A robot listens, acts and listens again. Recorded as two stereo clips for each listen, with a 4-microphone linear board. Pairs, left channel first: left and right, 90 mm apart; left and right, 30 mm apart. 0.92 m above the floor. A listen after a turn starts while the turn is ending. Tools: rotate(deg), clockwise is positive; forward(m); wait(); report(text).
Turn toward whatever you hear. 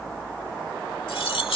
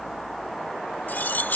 rotate(-90)
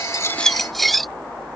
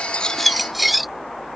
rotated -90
report("Facing the cutlery clinking.")